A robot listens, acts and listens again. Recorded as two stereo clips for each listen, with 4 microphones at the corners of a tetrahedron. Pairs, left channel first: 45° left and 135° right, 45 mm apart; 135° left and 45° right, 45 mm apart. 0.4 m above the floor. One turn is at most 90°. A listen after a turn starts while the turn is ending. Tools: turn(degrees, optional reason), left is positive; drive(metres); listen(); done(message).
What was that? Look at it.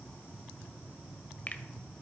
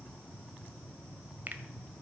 done("Found it: a finger snap, straight ahead, 1 to 2 m away.")